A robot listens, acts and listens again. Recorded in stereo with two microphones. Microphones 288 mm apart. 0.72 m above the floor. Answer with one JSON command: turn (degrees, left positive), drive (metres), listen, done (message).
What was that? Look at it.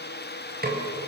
{"turn": -35}
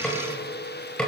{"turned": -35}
{"done": "Found it: a snare drum, straight ahead."}